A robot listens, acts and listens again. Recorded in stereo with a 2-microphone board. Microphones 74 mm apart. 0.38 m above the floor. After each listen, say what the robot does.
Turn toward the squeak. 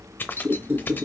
Turn 30° right.
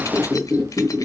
Found it: a squeak, straight ahead.